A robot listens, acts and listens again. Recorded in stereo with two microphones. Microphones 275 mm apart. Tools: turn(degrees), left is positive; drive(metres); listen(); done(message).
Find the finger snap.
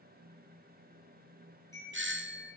listen()
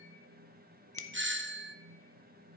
turn(degrees=50)
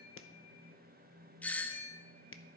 turn(degrees=65)
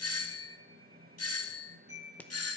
done("Facing the finger snap.")